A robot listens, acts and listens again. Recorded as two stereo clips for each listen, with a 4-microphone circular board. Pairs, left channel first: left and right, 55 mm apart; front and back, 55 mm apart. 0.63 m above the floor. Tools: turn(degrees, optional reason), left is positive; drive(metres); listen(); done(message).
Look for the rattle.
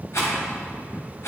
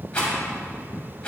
turn(degrees=70, reason="The rattle: 70° left.")
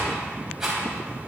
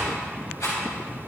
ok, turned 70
done("Found it: a rattle, straight ahead, 2 to 4 m away.")